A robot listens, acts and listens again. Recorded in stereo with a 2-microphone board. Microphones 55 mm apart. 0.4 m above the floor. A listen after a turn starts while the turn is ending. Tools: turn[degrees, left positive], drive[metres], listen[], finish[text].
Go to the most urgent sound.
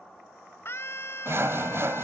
Thought: The scream: about 50° left or 130° left.
Action: turn[50]
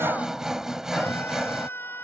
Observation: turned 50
Thought: So it is at 65° left.
Action: turn[65]
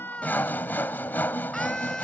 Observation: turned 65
Thought: The scream is now 10° left.
Action: turn[10]
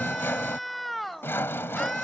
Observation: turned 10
Action: drive[1.0]
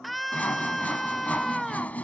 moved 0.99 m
Action: drive[1.0]
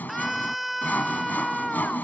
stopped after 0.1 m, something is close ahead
Action: finish[Arrived at the scream, straight ahead.]